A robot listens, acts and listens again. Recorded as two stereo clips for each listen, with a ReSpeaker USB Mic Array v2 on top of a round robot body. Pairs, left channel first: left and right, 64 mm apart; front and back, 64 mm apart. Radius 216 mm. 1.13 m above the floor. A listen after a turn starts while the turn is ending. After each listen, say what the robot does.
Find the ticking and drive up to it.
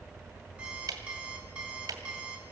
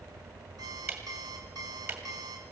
Turn 120° right.
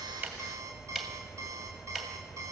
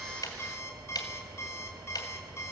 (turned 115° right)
Drive 1.0 m forward.
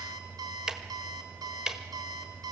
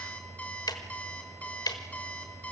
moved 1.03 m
Turn 10° right.
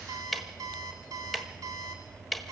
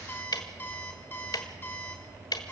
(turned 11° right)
Drive 1.0 m forward.
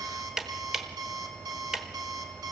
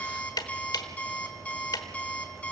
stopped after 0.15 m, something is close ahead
I am next to the ticking.